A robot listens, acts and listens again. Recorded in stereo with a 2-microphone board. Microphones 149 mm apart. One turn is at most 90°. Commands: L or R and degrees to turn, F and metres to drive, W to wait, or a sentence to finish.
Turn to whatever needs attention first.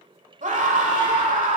R55
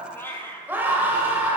R15
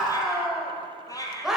Facing the scream, 1 to 2 m away.